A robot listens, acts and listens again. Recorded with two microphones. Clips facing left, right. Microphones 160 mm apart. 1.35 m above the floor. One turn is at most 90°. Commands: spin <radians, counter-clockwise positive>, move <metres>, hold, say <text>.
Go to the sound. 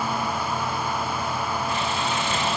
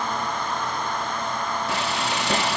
spin -1.57
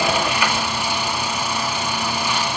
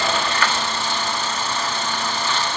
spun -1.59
spin 0.26
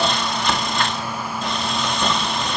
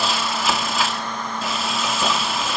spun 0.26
move 1.0
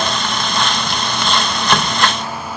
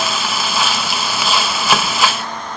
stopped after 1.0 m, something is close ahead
say I am next to the frying.